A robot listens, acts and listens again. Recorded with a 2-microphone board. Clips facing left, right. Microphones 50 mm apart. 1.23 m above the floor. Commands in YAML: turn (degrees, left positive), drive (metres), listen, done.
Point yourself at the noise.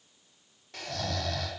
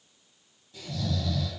turn: 70
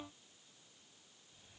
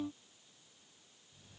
listen: true
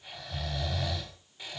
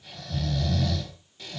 turn: 20
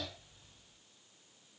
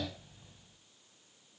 listen: true
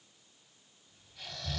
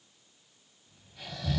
done: "Found it: snoring, straight ahead, 2 to 4 m away."